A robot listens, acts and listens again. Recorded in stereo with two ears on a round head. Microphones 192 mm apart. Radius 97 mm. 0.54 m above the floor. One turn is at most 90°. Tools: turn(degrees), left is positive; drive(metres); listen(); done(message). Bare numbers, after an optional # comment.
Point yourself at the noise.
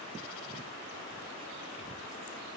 listen()
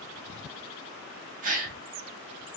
# The gasp: about 35° right or 145° right.
turn(-35)
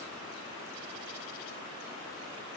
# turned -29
listen()
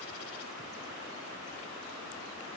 done("I heard a gasp, but can't make it out now. It was about 10° right or 115° right.")